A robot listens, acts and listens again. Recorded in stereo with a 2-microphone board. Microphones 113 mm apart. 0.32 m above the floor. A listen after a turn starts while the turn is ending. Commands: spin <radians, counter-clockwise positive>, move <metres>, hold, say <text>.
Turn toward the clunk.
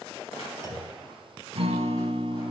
spin 0.70
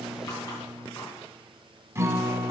hold
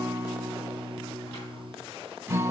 say I heard a clunk, but can't make it out now. It was about straight ahead or 100° left.